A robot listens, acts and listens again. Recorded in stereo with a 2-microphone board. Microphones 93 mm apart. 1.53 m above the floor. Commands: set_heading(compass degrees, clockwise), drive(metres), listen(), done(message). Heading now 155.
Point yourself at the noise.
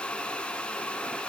listen()
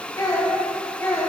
set_heading(130)
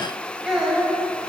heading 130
set_heading(140)
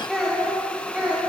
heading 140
set_heading(155)
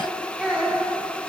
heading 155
set_heading(165)
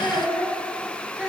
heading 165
set_heading(175)
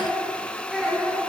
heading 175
done("Facing the child speaking, 1 to 2 m away.")